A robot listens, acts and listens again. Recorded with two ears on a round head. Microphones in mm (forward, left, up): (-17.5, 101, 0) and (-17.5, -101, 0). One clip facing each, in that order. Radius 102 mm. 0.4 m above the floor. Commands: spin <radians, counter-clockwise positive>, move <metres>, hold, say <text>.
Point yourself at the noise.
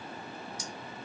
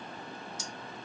spin -0.44
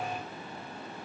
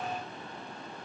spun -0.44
hold
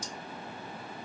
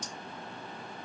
spin -2.18
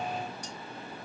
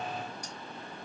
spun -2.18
spin -0.17
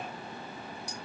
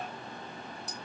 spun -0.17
say Facing the cutlery clinking.